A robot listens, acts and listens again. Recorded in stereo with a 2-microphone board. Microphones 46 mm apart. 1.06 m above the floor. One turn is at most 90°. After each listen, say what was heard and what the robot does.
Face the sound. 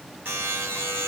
The buzzer: about 55° right or 125° right. Turn 55° right.
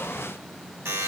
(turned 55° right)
So it is at 70° right. Turn 70° right.
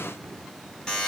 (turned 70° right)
The buzzer is now 15° left. Turn 15° left.
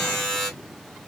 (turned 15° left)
Found it: a buzzer, straight ahead.